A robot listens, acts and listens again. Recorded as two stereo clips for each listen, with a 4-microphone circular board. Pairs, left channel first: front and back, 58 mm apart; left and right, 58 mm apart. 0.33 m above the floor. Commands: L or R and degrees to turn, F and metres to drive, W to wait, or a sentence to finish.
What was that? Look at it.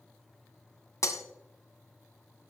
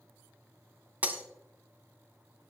R25
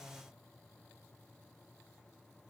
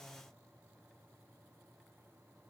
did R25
Facing where the breaking glass came from. I can't hear it now.